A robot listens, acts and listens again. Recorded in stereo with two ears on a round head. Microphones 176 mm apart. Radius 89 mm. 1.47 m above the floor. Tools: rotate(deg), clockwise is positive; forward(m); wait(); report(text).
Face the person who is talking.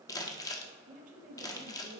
rotate(40)
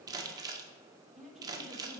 report("Found it: a woman speaking, straight ahead, 1 to 2 m away.")